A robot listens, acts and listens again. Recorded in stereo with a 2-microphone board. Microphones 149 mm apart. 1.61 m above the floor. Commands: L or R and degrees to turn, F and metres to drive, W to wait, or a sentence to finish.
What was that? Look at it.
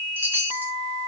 R30
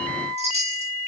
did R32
R135
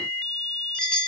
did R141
Facing the chime, 2 to 4 m away.